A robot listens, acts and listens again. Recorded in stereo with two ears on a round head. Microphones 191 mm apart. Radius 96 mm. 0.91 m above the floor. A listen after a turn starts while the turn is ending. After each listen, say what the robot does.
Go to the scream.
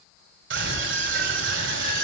Turn 55° right.
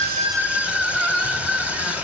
Drive 1.0 m forward.
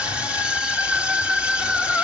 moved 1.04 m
Drive 1.0 m forward.
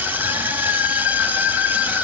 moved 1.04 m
Turn 10° right.
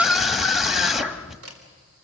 Drive 1.0 m forward.
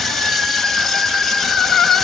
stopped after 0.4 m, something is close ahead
I am next to the scream.